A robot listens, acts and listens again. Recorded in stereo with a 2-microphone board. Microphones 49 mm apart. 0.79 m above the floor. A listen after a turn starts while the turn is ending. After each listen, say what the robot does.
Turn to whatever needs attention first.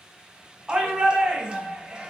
Turn 20° right.
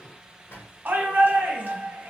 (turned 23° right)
Turn 135° right.
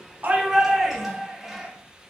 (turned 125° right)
Turn 10° right.
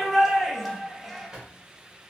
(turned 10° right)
Facing the shout, under 1 m away.